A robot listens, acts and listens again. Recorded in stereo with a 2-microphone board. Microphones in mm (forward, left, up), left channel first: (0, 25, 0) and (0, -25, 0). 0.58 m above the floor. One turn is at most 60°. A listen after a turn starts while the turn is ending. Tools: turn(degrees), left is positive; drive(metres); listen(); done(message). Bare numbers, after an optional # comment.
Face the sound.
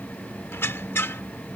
# The squeak: about 50° left or 130° left.
turn(50)
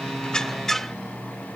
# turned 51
done("Found it: a squeak, straight ahead.")